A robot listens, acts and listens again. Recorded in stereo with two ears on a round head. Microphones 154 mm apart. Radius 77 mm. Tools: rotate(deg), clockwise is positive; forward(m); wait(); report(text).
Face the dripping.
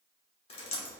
rotate(-35)
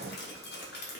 rotate(-105)
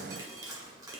rotate(20)
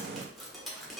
report("Found it: dripping, straight ahead, 1 to 2 m away.")